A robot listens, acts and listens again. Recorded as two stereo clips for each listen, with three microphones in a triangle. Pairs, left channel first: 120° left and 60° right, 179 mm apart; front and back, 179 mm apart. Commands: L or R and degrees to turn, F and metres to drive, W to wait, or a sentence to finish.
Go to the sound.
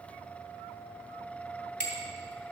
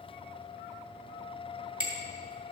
L120
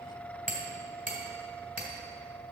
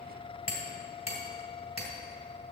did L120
R25
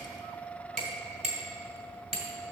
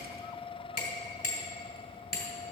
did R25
R10
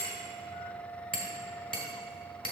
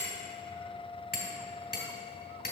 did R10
F1.0
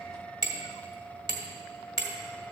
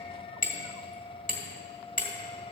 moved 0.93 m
F1.0
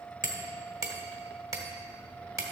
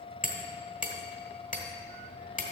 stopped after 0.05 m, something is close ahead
Arrived at the hammering, straight ahead.